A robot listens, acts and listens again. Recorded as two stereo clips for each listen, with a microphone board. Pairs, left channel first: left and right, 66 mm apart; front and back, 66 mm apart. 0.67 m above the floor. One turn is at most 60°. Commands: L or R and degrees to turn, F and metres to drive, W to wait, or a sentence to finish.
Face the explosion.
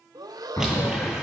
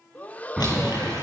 L60
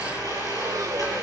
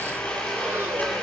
L35
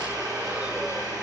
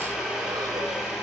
Facing where the explosion came from. I can't hear it now.